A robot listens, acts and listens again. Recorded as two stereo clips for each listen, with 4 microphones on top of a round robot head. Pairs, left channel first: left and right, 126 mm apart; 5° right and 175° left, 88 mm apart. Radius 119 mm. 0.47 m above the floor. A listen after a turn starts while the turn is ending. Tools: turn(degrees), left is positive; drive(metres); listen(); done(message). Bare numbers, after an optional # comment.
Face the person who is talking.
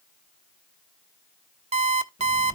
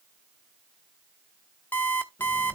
listen()
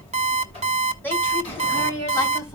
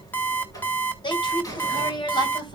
# The woman speaking: 20° left.
turn(20)
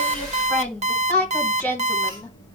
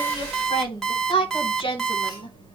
# The woman speaking is now 10° left.
turn(10)
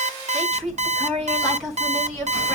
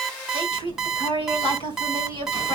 done("Found it: a woman speaking, straight ahead, over 4 m away.")